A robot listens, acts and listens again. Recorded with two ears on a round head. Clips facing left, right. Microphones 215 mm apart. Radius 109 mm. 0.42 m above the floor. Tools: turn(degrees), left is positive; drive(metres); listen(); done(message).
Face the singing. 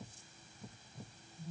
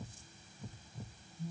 listen()
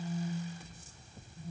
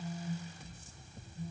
listen()
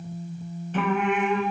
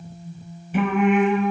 turn(degrees=-30)
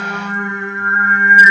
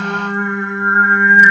turn(degrees=20)
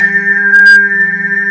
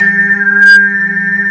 done("Facing the singing, under 1 m away.")